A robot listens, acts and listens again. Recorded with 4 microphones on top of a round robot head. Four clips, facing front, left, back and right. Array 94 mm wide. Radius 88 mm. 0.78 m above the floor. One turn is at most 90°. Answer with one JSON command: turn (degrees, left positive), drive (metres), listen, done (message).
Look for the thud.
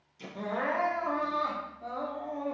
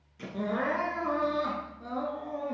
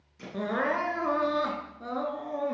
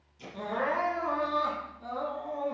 {"turn": 90}
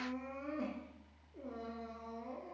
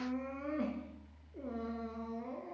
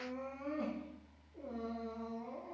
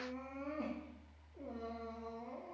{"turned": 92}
{"turn": 25}
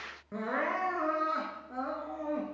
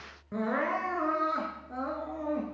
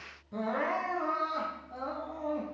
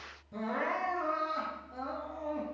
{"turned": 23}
{"done": "I heard a thud from this way, but can't make it out now."}